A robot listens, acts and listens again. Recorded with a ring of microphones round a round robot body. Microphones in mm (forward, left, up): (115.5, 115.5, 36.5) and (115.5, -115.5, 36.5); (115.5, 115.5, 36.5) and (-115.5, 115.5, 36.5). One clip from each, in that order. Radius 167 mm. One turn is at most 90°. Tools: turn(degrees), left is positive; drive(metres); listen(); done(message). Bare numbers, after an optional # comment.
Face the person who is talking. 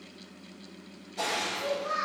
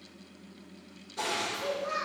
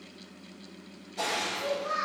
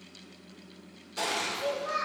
# The child speaking: 120° right.
turn(-90)
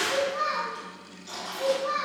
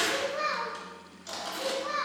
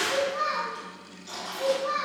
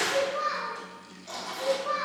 # The child speaking is now 20° right.
turn(-20)
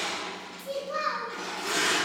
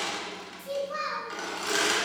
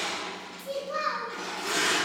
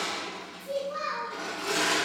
done("Found it: a child speaking, straight ahead.")